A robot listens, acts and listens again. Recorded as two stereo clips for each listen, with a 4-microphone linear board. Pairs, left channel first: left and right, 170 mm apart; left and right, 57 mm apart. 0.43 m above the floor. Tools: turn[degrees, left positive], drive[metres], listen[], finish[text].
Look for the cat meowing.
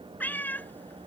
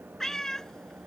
Action: turn[30]
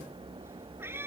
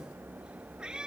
Thought: So it is at 15° right.
Action: turn[-15]
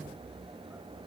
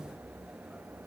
Action: listen[]
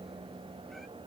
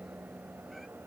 Action: listen[]
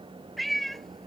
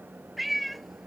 Action: finish[Found it: a cat meowing, straight ahead.]